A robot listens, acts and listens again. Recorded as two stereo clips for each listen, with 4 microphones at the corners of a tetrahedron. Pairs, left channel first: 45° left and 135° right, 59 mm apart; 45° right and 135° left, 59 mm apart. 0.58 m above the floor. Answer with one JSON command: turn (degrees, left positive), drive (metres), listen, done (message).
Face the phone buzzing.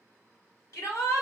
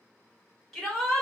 {"listen": true}
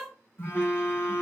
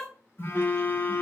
{"turn": 10}
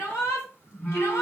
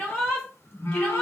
{"done": "Found it: a phone buzzing, straight ahead, 1 to 2 m away."}